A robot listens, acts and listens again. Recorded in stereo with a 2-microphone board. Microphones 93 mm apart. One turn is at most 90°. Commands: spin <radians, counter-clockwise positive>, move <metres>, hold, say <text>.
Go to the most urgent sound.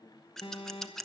spin 1.13
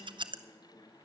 hold
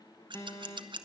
spin 0.70
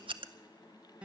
spin -0.17
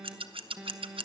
move 1.0
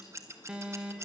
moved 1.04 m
spin -0.26
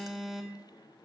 move 1.0
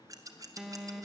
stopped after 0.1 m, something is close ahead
say Arrived at the alarm, straight ahead.